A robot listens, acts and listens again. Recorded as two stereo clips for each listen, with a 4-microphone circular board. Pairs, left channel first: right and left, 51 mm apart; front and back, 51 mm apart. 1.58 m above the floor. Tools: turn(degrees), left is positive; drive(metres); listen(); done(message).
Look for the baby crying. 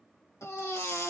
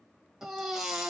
turn(degrees=-100)
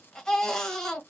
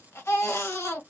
turn(degrees=-15)
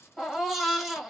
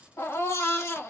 done("Found it: a baby crying, straight ahead, 1 to 2 m away.")